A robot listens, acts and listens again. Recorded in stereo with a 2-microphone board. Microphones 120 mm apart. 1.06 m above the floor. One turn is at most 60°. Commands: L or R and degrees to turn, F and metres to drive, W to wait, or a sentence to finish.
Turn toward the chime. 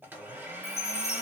L60
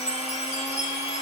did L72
L35
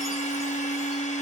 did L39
W
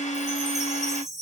Facing the chime.